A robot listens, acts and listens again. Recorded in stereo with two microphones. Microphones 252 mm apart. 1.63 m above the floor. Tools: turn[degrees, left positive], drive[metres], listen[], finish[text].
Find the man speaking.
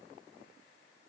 Action: listen[]
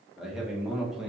Action: turn[30]
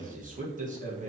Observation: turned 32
Thought: So it is at 35° right.
Action: turn[-35]
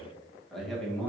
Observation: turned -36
Action: finish[Found it: a man speaking, straight ahead, 1 to 2 m away.]